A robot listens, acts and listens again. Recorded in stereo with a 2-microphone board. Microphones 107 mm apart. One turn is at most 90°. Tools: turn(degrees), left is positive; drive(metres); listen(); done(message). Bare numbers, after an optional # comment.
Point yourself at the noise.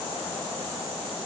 listen()
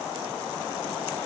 listen()
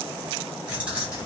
turn(-30)
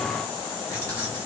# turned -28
# So it is at 25° left.
turn(25)
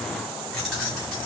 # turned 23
done("Facing the keys jangling.")